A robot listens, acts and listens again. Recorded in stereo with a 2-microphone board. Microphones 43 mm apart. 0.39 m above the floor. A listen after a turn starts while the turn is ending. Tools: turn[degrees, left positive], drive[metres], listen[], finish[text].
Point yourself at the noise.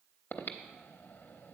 Thought: The breathing: about 60° left or 120° left.
Action: turn[60]
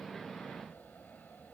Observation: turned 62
Thought: So it is at 50° left.
Action: turn[50]
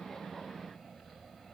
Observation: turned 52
Action: finish[Found it: breathing, straight ahead, under 1 m away.]